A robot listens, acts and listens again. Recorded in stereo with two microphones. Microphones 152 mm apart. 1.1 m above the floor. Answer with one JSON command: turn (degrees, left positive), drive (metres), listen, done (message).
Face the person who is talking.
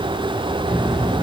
{"turn": 30}
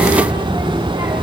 {"turn": -20}
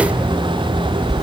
{"done": "Facing the child speaking."}